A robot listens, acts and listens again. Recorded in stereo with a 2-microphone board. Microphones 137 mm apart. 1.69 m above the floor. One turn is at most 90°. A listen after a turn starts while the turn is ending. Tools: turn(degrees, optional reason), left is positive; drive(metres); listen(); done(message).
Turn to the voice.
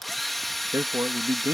turn(degrees=-25, reason="The man speaking: about 25° right or 155° right.")
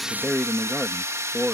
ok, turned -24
done("Facing the man speaking.")